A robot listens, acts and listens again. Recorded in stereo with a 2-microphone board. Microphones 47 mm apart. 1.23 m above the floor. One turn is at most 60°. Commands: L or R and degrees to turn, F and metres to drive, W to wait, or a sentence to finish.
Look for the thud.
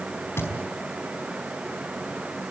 L60
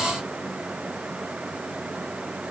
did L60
W
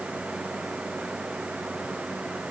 I heard a thud, but can't make it out now. It was about straight ahead or 60° left.